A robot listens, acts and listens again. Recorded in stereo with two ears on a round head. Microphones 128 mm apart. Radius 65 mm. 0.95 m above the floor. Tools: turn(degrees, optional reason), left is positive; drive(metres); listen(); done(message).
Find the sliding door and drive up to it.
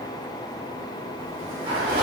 turn(degrees=-35, reason="The sliding door: about 35° right or 145° right.")
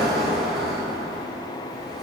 drive(metres=1.0)
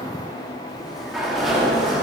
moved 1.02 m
drive(metres=1.0)
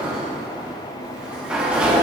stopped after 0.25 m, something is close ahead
done("Arrived at the sliding door, straight ahead.")